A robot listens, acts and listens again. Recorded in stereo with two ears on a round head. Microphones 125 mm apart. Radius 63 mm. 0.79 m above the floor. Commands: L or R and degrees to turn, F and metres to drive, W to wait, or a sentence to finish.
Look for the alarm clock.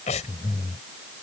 W
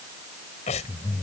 W
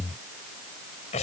I can't make out an alarm clock, only breathing.